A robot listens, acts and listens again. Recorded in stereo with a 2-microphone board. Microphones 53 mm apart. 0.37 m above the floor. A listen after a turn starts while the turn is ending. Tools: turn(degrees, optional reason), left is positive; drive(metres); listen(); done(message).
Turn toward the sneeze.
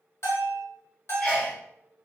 turn(degrees=15, reason="The sneeze: about 15° left or 165° left.")
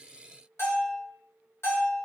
listen()
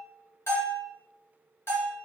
done("I heard a sneeze, but can't make it out now. It was about straight ahead or 150° left.")